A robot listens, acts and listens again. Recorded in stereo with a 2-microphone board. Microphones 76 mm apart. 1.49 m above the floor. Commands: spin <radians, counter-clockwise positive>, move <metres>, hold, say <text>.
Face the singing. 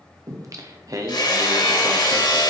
spin -0.79
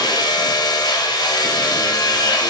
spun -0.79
hold
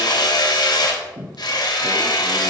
spin -1.57
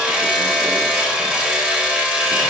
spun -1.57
hold
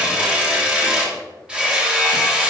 hold
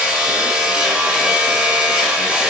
say I heard singing from this way, but can't make it out now.